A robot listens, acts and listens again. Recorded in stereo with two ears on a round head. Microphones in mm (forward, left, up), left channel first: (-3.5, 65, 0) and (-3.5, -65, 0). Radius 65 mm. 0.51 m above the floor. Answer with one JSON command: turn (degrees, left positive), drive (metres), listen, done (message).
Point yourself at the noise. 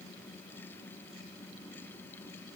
{"listen": true}
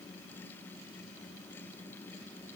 {"listen": true}
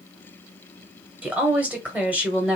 {"turn": -30}
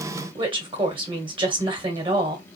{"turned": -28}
{"turn": -140}
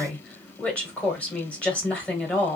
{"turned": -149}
{"turn": 10}
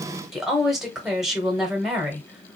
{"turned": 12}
{"done": "Facing the woman speaking, 1 to 2 m away."}